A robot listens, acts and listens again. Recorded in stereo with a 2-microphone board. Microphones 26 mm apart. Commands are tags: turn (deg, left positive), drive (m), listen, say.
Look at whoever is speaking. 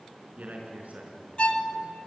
<turn deg="-90"/>
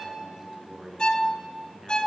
<turn deg="-10"/>
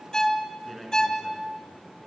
<say>Facing the man speaking, over 4 m away.</say>